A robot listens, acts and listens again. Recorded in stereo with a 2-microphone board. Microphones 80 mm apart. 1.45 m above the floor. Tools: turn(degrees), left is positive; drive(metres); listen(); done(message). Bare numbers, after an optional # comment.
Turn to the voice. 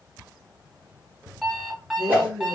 # The woman speaking: about 65° right or 115° right.
turn(-65)
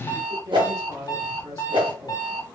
# So it is at 50° right.
turn(-50)
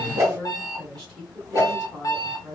done("Facing the woman speaking, 1 to 2 m away.")